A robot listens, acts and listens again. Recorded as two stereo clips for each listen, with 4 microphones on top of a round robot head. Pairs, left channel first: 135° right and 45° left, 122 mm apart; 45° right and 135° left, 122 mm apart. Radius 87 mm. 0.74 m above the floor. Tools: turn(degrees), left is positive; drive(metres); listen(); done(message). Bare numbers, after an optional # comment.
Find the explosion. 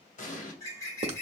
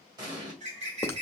# The explosion: 165° right.
turn(-165)
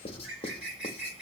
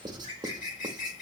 done("Facing where the explosion came from. I can't hear it now.")